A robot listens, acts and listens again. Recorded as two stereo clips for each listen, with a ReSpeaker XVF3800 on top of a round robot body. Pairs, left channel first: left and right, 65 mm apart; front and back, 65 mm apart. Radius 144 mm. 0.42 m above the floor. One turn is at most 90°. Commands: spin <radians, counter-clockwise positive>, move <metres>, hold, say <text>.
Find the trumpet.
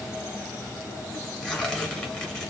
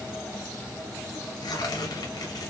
hold
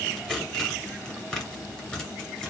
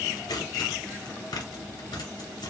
hold
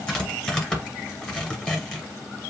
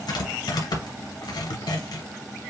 say I can't make out a trumpet, only tearing paper.